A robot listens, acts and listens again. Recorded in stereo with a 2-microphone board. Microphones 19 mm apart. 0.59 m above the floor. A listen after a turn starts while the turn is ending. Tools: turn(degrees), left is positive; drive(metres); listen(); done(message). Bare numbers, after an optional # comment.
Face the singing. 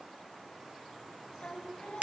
turn(90)
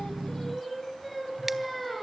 done("Found it: singing, straight ahead.")